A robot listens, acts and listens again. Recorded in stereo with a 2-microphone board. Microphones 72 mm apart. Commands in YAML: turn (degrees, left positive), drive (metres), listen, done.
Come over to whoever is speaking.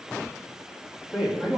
turn: -15
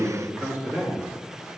turn: -150
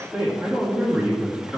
drive: 1.0
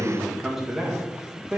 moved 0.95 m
drive: 1.0
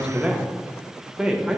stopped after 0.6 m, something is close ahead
turn: -10
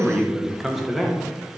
done: "Arrived at the man speaking, straight ahead."